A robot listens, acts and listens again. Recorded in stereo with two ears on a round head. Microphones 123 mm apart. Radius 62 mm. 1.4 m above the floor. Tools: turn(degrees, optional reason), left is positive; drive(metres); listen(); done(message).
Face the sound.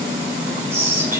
turn(degrees=-20, reason="The whispering: about 20° right or 160° right.")
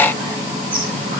listen()
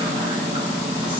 listen()
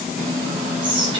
turn(degrees=-140, reason="So it is at 140° right.")
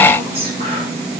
listen()
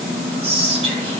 turn(degrees=-45, reason="The whispering is now 45° right.")
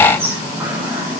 turn(degrees=-20, reason="The whispering is now 20° right.")
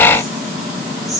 done("Found it: whispering, straight ahead, over 4 m away.")